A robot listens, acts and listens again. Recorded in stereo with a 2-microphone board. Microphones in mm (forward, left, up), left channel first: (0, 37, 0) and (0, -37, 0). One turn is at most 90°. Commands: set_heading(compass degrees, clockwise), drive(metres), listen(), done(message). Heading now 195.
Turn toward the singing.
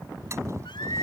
set_heading(105)
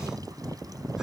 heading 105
listen()
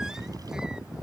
listen()
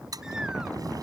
done("Facing where the singing came from. I can't hear it now.")